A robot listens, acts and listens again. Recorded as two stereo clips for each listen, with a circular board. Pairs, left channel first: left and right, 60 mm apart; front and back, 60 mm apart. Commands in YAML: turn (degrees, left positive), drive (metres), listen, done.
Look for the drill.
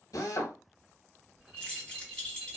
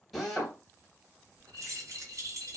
turn: 90
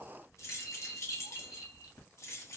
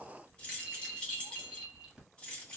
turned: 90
listen: true
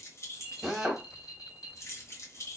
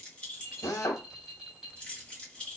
done: "Facing the drill, under 1 m away."